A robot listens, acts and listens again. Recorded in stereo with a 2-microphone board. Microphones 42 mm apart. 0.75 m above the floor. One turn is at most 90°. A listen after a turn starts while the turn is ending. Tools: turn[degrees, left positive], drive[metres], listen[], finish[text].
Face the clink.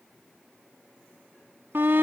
Action: listen[]
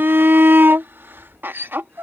Action: listen[]
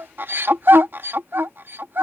Action: finish[I can't make out a clink, only a shout.]